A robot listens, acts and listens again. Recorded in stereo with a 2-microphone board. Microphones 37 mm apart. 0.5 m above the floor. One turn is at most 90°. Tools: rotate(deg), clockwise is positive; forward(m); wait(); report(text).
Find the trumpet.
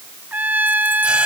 rotate(55)
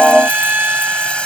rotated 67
rotate(60)
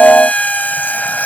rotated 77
rotate(-20)
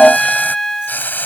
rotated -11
rotate(-10)
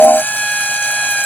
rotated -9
report("Found it: a trumpet, straight ahead.")